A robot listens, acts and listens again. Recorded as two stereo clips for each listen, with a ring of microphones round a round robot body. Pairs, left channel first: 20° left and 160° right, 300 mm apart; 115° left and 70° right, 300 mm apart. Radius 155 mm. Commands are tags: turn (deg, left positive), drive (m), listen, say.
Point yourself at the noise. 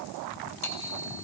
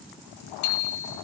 <turn deg="75"/>
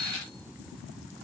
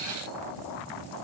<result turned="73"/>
<listen/>
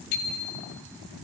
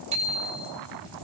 <say>Facing the bicycle bell, 2 to 4 m away.</say>